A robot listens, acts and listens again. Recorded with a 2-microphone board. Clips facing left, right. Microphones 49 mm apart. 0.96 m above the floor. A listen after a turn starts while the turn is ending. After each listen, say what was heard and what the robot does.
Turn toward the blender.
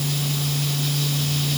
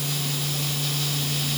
Keep listening.
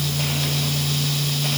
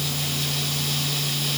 Keep listening.
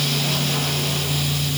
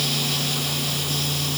I can't make out a blender.